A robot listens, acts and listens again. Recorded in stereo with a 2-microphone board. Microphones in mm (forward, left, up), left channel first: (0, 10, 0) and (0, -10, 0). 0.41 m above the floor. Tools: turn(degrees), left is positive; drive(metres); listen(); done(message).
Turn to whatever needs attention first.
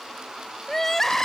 turn(degrees=20)
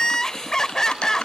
turn(degrees=140)
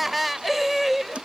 done("Found it: crying, straight ahead.")